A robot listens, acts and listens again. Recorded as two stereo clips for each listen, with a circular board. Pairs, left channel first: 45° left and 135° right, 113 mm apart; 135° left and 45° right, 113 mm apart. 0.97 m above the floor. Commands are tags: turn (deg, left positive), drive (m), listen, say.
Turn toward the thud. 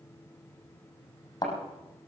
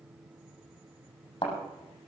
<turn deg="95"/>
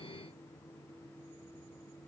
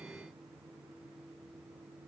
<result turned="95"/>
<say>I heard a thud from this way, but can't make it out now.</say>